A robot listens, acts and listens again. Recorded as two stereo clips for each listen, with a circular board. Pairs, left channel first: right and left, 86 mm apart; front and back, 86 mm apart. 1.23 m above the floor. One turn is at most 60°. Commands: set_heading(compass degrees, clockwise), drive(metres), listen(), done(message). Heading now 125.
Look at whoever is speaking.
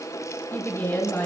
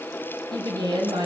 set_heading(185)
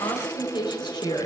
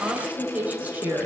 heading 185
set_heading(245)
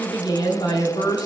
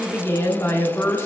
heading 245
set_heading(305)
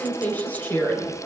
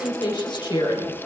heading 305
set_heading(325)
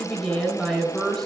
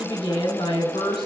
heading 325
done("Found it: a woman speaking, straight ahead, 2 to 4 m away.")